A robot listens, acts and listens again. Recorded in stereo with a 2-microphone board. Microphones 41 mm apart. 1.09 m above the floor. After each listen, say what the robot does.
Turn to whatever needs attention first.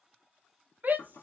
Turn 45° right.
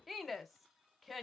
Found it: a shout, straight ahead, under 1 m away.